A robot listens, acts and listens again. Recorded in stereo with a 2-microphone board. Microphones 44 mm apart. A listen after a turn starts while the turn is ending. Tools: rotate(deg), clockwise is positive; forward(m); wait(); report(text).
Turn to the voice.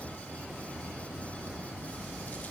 wait()
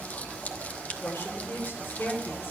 rotate(-70)
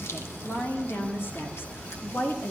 rotate(-65)
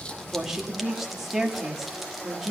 rotate(10)
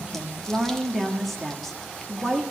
report("Found it: a woman speaking, straight ahead, 1 to 2 m away.")